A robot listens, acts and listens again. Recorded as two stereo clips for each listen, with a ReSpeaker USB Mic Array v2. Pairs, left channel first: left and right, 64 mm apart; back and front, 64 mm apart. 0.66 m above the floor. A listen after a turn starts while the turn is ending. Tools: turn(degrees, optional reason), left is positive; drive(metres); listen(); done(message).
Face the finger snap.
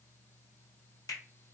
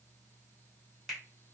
turn(degrees=90, reason="The finger snap: 90° left.")
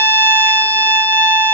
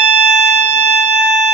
listen()
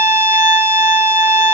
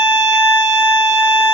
listen()
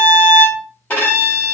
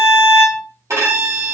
done("Facing where the finger snap came from. I can't hear it now.")